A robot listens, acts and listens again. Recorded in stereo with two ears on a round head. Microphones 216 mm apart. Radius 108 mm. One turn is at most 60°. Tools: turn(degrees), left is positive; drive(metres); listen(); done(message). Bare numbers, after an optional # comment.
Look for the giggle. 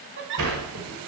# The giggle: about 50° right or 130° right.
turn(-50)
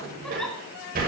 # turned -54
done("Facing the giggle, 2 to 4 m away.")